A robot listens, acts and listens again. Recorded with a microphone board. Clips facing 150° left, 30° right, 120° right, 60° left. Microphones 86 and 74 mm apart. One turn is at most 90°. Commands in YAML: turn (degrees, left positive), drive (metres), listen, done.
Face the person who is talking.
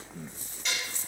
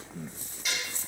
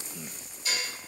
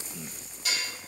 listen: true
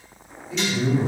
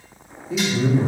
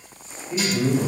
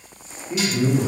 turn: 15
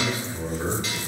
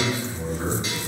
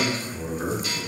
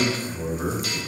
turn: 15
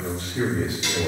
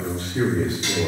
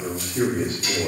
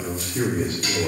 turn: 10
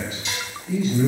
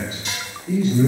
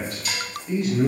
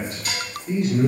done: "Found it: a man speaking, straight ahead."